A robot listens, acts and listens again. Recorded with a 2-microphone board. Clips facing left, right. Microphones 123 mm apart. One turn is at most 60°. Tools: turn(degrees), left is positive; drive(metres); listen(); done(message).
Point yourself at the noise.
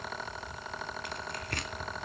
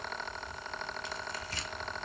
turn(degrees=60)
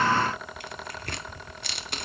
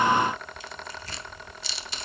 turn(degrees=60)
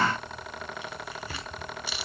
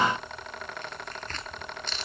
turn(degrees=10)
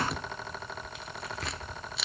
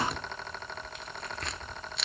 done("Found it: tearing paper, straight ahead, under 1 m away.")